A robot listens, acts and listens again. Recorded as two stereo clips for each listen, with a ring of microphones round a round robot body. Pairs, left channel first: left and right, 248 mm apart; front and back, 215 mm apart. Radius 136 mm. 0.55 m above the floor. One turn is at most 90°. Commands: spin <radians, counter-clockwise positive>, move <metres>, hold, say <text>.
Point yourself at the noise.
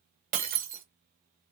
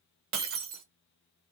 spin -1.57
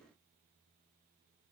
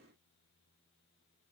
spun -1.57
spin -1.05
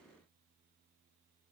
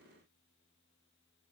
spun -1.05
say I heard breaking glass from this way, but can't make it out now.